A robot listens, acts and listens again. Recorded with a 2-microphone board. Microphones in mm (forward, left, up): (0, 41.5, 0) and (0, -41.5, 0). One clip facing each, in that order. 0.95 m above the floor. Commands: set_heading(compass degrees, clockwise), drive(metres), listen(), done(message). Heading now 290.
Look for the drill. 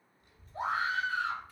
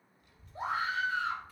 listen()
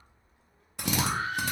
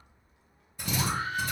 set_heading(215)
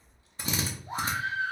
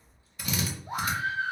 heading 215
set_heading(185)
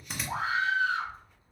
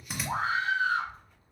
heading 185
done("Facing the drill.")